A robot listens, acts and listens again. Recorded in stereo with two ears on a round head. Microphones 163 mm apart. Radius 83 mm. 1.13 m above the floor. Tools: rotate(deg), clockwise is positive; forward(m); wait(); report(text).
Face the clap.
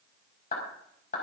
rotate(-45)
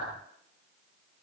wait()
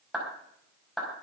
report("Facing the clap.")